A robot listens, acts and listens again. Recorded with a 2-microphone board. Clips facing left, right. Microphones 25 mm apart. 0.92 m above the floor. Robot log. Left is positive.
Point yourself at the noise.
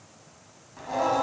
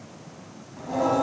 note: The singing: about 25° left or 155° left.
cmd yaw +25
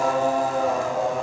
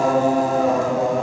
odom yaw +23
end: Found it: singing, straight ahead.